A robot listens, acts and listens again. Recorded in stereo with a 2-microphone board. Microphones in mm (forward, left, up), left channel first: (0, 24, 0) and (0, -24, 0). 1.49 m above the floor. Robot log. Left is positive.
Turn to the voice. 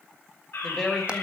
cmd yaw +30
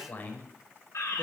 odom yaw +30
note: So it is at 140° left.
cmd yaw +140
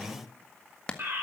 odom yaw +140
note: The woman speaking is now 10° right.
cmd yaw -10
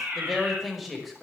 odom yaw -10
end: Found it: a woman speaking, straight ahead.